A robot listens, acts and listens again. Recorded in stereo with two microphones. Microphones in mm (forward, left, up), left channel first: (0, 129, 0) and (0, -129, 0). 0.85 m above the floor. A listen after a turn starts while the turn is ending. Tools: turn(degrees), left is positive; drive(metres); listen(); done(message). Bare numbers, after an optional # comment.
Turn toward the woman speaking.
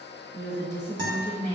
# The woman speaking: about 35° left or 145° left.
turn(35)
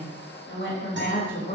# The woman speaking: about 35° left or 145° left.
turn(35)
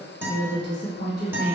# The woman speaking: about 35° left or 145° left.
turn(35)
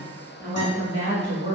# So it is at 130° left.
turn(130)
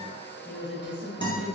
done("Found it: a woman speaking, straight ahead.")